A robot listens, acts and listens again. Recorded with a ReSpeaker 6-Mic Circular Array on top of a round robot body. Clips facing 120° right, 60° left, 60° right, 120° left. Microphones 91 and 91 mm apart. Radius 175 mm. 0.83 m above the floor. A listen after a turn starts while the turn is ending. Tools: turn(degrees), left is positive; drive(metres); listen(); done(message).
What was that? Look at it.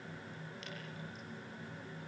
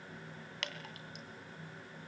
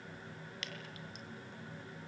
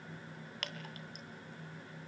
turn(degrees=80)
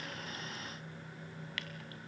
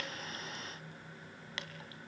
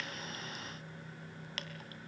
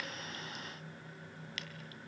turn(degrees=-10)
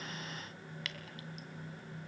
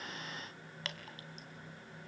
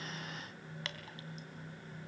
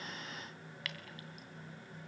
done("Facing the dripping, 2 to 4 m away.")